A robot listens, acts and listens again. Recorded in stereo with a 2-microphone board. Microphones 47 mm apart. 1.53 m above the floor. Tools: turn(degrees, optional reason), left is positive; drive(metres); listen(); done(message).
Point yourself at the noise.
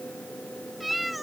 turn(degrees=30)
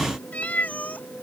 turn(degrees=145, reason="So it is at 145° left.")
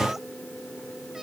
listen()
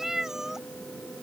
turn(degrees=-10, reason="The cat meowing is now 10° right.")
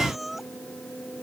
done("Found it: a cat meowing, straight ahead.")